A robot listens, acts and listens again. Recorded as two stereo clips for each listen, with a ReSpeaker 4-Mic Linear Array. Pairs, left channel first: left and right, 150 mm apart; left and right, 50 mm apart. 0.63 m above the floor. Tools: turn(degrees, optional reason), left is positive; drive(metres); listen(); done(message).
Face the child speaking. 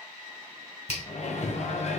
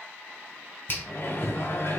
listen()
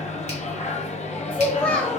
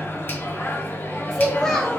turn(degrees=30)
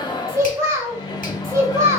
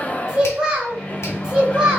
turn(degrees=-20, reason="So it is at 20° right.")
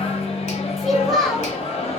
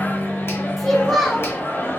done("Facing the child speaking.")